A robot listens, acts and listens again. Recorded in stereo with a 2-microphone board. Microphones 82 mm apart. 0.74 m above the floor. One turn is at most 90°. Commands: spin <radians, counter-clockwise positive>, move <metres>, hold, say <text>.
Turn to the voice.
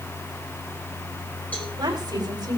spin -1.05
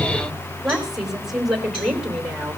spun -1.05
say Found it: a woman speaking, straight ahead, 2 to 4 m away.